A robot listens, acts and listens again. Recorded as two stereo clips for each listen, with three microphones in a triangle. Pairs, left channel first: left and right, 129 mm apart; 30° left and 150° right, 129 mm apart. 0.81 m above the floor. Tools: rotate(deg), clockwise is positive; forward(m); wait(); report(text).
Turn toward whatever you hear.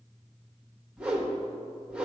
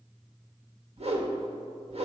rotate(170)
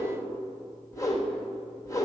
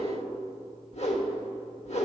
rotate(-30)
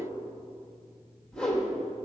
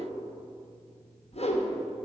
rotate(-10)
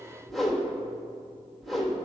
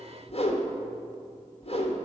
report("Found it: a whoosh, straight ahead, under 1 m away.")